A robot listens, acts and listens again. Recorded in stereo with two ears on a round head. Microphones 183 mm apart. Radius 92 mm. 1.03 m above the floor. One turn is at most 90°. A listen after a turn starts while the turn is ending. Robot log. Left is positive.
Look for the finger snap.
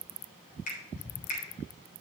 note: The finger snap: about 40° left or 140° left.
cmd yaw +40
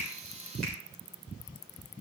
cmd idle
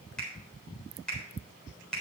end: Found it: a finger snap, straight ahead, 2 to 4 m away.